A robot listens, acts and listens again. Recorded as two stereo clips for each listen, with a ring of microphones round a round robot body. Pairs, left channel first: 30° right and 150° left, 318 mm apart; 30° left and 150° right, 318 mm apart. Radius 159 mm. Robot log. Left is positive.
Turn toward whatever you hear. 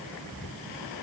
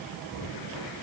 cmd idle
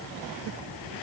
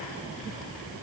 cmd idle
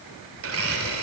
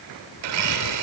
note: The blender: 160° right.
cmd yaw -160
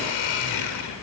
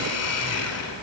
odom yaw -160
note: The blender is now 15° right.
cmd yaw -15
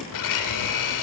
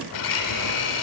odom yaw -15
end: Found it: a blender, straight ahead.